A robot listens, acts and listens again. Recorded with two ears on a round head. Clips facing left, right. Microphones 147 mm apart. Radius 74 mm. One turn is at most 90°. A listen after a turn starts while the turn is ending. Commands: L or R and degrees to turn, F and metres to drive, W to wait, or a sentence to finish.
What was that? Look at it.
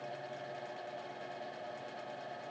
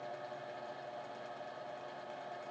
W
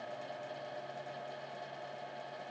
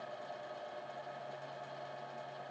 W
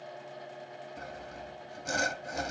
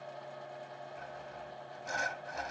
L50
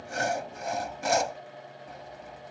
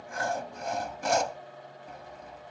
Facing the sawing.